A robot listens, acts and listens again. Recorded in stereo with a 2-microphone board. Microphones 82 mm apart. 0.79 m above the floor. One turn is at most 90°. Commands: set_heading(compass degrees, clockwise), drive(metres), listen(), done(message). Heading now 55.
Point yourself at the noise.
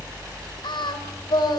set_heading(340)
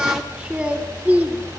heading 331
set_heading(351)
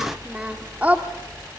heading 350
set_heading(10)
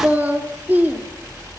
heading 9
set_heading(34)
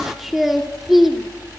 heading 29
done("Facing the singing, 2 to 4 m away.")